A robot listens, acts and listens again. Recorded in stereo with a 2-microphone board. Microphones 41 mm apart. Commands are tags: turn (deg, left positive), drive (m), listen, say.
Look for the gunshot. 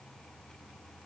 <listen/>
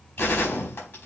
<turn deg="60"/>
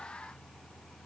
<listen/>
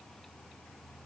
<say>I heard a gunshot, but can't make it out now. It was about straight ahead or 60° left.</say>